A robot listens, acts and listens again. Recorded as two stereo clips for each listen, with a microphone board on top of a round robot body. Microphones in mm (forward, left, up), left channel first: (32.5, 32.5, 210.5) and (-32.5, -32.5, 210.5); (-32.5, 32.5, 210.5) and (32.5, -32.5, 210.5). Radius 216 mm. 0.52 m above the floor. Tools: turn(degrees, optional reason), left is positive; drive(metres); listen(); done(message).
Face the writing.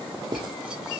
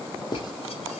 turn(degrees=180, reason="The writing: straight behind.")
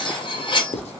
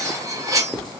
turn(degrees=45, reason="The writing is now 45° left.")
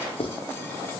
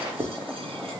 turn(degrees=15, reason="The writing is now 15° left.")
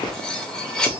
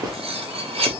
done("Facing the writing.")